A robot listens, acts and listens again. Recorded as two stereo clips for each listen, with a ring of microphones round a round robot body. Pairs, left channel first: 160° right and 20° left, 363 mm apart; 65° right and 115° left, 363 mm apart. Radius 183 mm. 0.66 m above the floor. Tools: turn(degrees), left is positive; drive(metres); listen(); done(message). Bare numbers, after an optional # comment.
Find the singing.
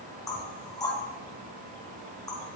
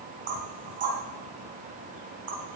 listen()
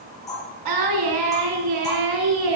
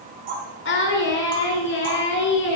done("Found it: singing, straight ahead, 2 to 4 m away.")